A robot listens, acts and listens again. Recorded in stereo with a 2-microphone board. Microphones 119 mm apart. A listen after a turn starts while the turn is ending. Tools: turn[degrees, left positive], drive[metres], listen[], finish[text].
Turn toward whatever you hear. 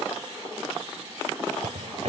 Action: turn[-90]
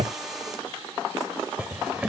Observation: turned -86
Thought: So it is at 10° right.
Action: turn[-10]
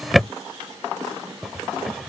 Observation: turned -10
Action: finish[Facing the drawer.]